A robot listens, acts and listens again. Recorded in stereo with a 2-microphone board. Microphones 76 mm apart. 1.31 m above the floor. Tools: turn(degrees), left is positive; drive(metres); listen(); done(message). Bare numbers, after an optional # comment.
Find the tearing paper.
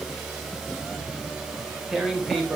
turn(-30)
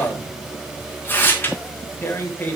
# So it is at 25° left.
turn(25)
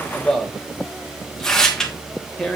done("Found it: tearing paper, straight ahead, 1 to 2 m away.")